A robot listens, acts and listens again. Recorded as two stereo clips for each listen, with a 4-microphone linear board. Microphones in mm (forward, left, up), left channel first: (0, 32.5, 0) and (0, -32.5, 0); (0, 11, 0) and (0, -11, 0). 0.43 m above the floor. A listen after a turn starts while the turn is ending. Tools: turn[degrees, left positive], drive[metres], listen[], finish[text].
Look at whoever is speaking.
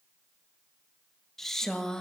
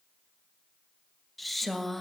Action: turn[30]
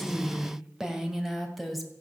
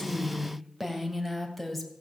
Action: turn[30]
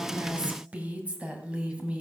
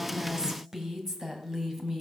Thought: So it is at 20° right.
Action: turn[-20]
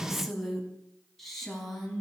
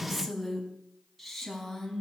Action: finish[Found it: a woman speaking, straight ahead, 2 to 4 m away.]